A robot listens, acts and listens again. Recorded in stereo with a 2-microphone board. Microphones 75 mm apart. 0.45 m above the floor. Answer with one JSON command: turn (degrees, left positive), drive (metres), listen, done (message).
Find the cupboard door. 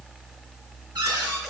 {"turn": -90}
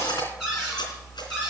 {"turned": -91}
{"done": "Found it: a cupboard door, straight ahead."}